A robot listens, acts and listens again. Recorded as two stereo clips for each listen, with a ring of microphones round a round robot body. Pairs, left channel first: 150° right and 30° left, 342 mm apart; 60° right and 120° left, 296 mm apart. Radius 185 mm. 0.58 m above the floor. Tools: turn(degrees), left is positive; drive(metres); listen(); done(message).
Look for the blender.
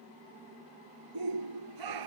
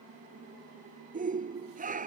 listen()
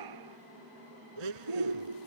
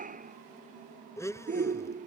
turn(degrees=20)
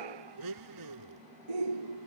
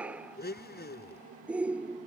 done("Facing the blender.")